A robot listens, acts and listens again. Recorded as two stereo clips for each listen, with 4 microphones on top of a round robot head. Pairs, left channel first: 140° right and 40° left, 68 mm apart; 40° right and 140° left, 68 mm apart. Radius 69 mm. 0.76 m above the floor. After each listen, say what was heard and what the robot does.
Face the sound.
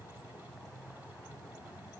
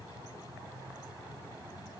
Keep listening.
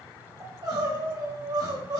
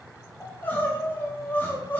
The crying: 20° left. Turn 20° left.
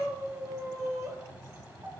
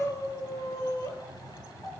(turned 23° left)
Found it: crying, straight ahead.